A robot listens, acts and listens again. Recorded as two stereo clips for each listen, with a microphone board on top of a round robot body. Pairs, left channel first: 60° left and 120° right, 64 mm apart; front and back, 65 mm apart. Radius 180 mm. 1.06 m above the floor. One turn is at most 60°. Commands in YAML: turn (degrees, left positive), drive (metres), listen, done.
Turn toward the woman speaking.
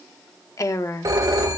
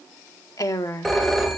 turn: 25
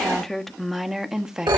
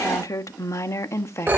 turn: -40
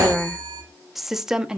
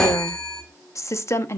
turn: -40
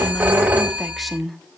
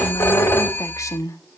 turn: -30
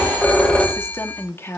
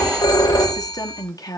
turn: 10
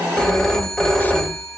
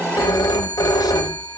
listen: true
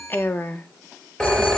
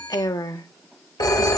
done: "Found it: a woman speaking, straight ahead, 1 to 2 m away."